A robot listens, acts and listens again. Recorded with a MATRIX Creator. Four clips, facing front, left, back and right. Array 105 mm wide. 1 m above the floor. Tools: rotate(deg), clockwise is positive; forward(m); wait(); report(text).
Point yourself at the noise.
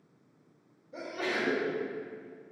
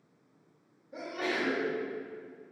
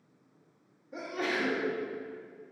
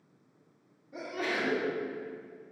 rotate(-175)
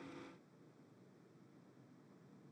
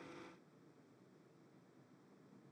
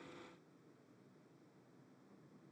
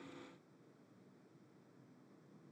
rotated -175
report("I heard a sneeze from this way, but can't make it out now.")